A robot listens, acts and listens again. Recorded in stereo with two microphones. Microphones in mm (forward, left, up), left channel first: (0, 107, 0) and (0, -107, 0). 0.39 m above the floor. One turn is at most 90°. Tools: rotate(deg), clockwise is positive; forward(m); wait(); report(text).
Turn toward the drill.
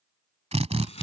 rotate(30)
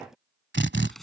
rotate(90)
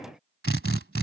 rotate(75)
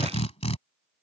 rotate(-30)
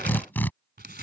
rotate(-10)
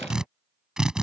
report("Found it: a drill, straight ahead.")